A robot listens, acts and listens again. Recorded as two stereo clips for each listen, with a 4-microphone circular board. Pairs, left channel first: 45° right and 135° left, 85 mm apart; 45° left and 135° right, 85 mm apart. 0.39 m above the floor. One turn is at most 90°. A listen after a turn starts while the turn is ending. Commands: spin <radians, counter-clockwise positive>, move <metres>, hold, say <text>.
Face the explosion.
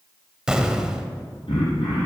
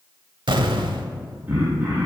spin -1.57
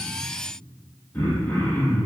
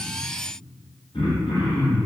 spin -0.96
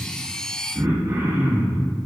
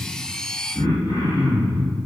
say I heard an explosion from this way, but can't make it out now.